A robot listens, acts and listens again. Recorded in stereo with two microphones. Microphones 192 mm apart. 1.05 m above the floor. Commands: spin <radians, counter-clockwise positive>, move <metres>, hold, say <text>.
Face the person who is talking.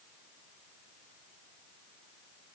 hold
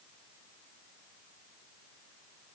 hold
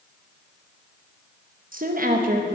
spin -0.79
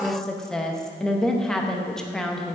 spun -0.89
say Facing the woman speaking, under 1 m away.